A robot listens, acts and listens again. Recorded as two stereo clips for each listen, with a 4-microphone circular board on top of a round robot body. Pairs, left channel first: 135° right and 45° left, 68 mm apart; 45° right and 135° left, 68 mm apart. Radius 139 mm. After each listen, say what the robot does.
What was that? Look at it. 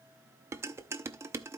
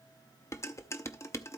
Found it: dishes clattering, straight ahead.